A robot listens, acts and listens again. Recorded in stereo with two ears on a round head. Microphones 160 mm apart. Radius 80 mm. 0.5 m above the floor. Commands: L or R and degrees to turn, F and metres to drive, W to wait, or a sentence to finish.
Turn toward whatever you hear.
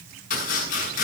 L50
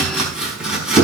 Facing the chopping.